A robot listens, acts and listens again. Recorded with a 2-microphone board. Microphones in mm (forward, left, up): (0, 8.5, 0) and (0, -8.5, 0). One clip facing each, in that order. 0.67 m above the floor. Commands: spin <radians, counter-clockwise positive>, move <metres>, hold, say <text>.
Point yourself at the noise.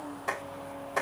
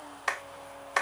spin -0.96
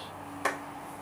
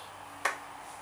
spin -0.26
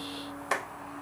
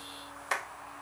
say Found it: a clap, straight ahead.